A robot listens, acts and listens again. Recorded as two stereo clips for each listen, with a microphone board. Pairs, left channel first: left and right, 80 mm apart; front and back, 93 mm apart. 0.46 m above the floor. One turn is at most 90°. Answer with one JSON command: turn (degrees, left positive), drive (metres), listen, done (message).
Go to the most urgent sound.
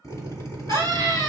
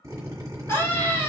{"turn": 55}
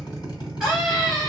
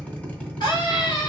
{"drive": 1.0}
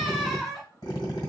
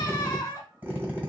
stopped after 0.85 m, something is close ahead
{"done": "I am next to the scream."}